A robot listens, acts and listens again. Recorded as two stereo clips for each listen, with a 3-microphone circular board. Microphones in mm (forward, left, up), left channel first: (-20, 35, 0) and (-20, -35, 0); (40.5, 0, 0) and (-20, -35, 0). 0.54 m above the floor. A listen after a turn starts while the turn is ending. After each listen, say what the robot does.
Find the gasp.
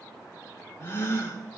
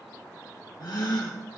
Turn 40° left.
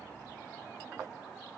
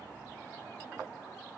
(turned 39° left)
I heard a gasp from this way, but can't make it out now.